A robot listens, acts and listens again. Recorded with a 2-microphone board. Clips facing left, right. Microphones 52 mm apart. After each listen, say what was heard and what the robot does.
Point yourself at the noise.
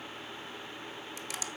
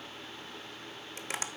The tapping: about 40° right or 140° right. Turn 40° right.
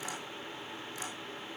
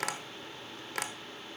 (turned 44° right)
So it is at 95° right. Turn 95° right.
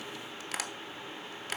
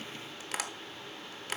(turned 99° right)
Found it: tapping, straight ahead, 1 to 2 m away.